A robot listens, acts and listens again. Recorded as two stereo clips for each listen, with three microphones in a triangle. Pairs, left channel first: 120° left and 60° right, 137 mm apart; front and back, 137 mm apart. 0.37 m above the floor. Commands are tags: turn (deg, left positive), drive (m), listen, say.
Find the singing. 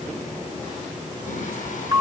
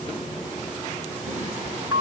<listen/>
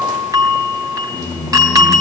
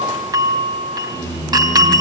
<turn deg="140"/>
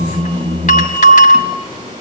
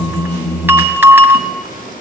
<say>Found it: singing, straight ahead, over 4 m away.</say>